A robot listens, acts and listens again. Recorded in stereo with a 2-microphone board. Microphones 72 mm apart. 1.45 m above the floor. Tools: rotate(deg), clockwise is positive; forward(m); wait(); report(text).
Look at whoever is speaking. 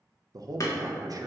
rotate(55)
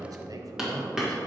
rotate(65)
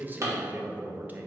rotate(25)
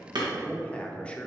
rotate(-15)
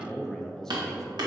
rotate(-10)
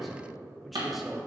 report("Found it: a man speaking, straight ahead, under 1 m away.")